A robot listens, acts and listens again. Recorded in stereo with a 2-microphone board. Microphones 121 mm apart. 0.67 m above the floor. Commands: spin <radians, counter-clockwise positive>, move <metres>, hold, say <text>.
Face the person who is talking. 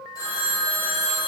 hold
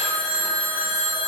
hold
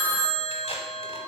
say I can't make out anyone speaking to turn to.